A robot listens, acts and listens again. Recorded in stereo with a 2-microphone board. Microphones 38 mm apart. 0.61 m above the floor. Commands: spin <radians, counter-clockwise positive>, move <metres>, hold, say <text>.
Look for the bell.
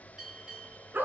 spin -0.35
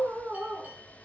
hold
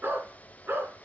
hold
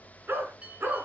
spin -2.44
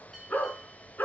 hold
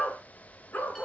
hold
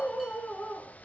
say Facing where the bell came from. I can't hear it now.